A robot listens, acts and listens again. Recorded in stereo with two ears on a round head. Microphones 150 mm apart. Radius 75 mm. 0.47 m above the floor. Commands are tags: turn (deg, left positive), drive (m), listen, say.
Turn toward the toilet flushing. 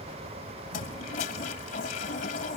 <turn deg="50"/>
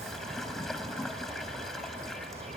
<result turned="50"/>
<say>Found it: a toilet flushing, straight ahead.</say>